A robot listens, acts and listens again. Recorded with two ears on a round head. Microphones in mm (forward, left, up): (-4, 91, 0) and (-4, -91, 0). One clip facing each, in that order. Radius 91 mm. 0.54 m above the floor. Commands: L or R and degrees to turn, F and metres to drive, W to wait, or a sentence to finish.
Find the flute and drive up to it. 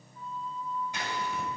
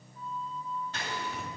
L70
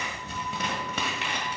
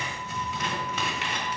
W
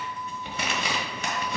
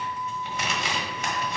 L25
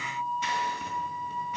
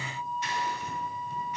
F1.0
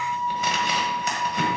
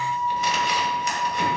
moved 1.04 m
F1.0
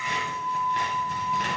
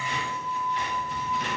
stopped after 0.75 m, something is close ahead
Arrived at the flute, straight ahead.